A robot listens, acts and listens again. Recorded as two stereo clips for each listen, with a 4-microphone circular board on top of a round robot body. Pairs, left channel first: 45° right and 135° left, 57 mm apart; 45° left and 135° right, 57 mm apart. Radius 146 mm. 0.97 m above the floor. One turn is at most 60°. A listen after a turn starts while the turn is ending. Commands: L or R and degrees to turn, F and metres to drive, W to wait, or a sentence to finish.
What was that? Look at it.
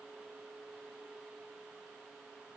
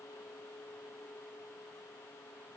W
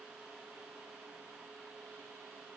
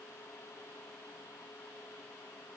W
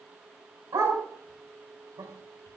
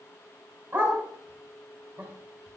L60
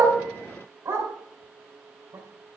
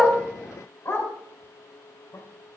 L60
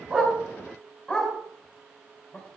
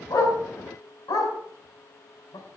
L35
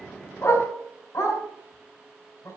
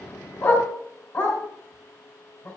Found it: a dog barking, straight ahead.